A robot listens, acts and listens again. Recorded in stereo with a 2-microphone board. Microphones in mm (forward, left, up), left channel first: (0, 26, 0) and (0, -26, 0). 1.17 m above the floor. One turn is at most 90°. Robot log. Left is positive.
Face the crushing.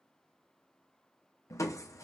note: The crushing: about 70° left or 110° left.
cmd yaw +70
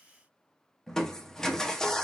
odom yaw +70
note: So it is at 10° left.
cmd yaw +10
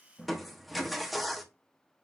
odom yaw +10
end: Facing the crushing.